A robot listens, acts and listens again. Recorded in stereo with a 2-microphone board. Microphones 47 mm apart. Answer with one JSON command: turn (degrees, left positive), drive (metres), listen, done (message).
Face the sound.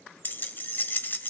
{"turn": 50}
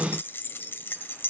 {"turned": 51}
{"turn": 65}
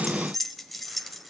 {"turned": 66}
{"done": "Found it: keys jangling, straight ahead, under 1 m away."}